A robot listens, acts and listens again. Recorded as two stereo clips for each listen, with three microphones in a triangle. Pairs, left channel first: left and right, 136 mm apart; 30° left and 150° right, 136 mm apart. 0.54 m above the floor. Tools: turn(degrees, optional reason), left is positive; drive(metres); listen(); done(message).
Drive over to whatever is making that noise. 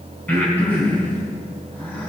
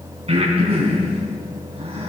turn(degrees=165, reason="The breathing: 165° left.")
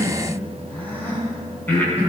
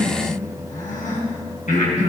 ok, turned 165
turn(degrees=15, reason="The breathing is now 15° left.")
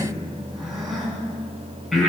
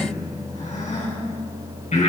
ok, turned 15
drive(metres=1.0)
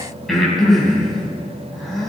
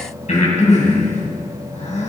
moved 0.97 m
drive(metres=1.0)
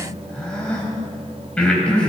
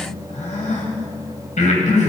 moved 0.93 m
turn(degrees=10, reason="The breathing is now 10° left.")
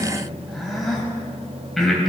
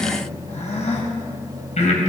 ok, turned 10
drive(metres=1.0)
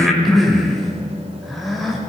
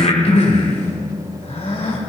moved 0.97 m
drive(metres=1.0)
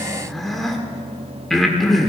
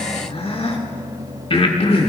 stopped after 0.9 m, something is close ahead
done("Arrived at the breathing, straight ahead.")